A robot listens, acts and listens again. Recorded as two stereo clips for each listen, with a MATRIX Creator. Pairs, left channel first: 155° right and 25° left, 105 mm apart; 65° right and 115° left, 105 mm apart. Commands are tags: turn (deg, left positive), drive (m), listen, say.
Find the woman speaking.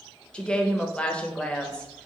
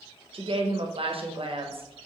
<turn deg="125"/>
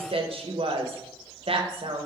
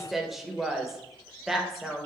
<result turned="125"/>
<turn deg="25"/>
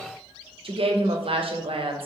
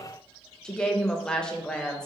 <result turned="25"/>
<turn deg="15"/>
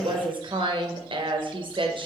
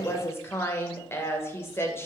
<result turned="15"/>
<say>Facing the woman speaking.</say>